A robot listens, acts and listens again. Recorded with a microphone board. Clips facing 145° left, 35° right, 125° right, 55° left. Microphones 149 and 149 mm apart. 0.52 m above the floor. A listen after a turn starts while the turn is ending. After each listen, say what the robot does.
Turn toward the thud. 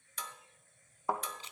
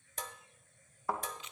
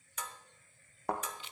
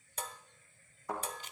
Turn 145° right.
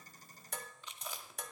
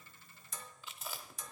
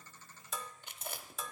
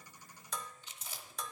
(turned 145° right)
I heard a thud from this way, but can't make it out now.